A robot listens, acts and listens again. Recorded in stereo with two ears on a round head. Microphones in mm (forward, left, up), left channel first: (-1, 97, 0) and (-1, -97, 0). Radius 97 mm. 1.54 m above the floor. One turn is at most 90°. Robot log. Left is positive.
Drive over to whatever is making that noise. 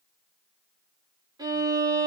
note: The violin: about 20° right or 160° right.
cmd yaw -20
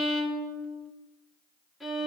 cmd fwd 1.0
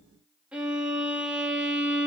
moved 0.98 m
cmd fwd 1.0
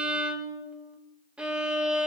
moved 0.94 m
cmd fwd 1.0
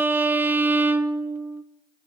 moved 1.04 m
note: The violin is now 10° right.
cmd yaw -10
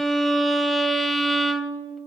cmd fwd 1.0
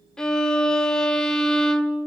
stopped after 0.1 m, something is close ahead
end: Arrived at the violin, straight ahead.